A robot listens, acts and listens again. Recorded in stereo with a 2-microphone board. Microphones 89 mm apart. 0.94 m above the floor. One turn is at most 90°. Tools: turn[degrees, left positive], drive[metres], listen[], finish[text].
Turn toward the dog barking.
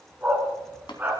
Thought: The dog barking: about 20° right or 160° right.
Action: turn[-20]
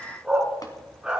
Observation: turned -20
Action: turn[-30]
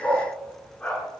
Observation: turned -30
Thought: So it is at 15° left.
Action: turn[15]
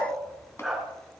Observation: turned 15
Action: finish[Found it: a dog barking, straight ahead, over 4 m away.]